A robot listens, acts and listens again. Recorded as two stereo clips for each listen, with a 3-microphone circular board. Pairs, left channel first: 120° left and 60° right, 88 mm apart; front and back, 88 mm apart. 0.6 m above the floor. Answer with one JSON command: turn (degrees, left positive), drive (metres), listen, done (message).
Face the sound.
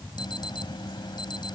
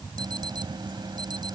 {"turn": 150}
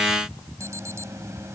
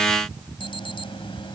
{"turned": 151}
{"done": "Facing the alarm."}